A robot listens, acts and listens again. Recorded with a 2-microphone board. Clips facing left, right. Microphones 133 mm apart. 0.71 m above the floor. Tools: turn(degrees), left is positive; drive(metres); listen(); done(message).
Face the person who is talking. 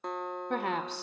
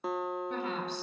turn(degrees=70)
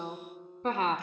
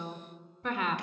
turn(degrees=35)
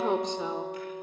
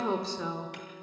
turn(degrees=20)
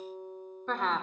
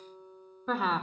done("Found it: a woman speaking, straight ahead, 1 to 2 m away.")